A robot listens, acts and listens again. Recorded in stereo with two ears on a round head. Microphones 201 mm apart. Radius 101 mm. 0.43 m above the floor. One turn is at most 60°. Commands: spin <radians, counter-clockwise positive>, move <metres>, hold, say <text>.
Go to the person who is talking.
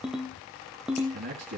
spin -0.70
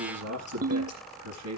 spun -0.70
spin -1.05
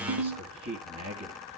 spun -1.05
spin -0.70
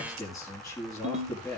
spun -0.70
move 1.0
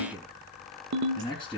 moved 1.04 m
move 1.0
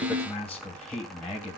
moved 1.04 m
spin 0.17
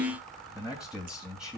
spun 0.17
move 1.0
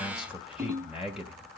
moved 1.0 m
move 1.0
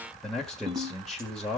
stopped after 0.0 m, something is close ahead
say Arrived at the man speaking, straight ahead.